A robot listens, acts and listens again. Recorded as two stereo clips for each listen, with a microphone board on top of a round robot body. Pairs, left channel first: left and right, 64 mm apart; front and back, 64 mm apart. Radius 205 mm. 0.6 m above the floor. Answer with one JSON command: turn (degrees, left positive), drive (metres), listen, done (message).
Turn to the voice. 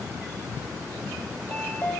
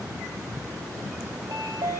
{"listen": true}
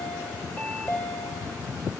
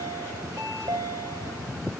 {"listen": true}
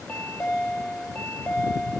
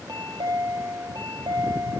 {"done": "I can't make out anyone speaking to turn to."}